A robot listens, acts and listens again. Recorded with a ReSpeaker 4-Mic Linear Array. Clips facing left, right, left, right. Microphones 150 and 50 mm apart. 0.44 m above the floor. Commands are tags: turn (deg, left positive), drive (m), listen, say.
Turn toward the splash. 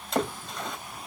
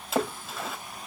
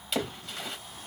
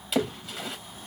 <turn deg="-30"/>
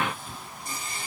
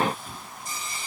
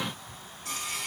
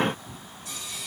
<listen/>
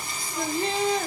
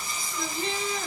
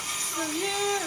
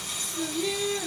<say>I heard a splash, but can't make it out now. It was about 25° left or 145° right.</say>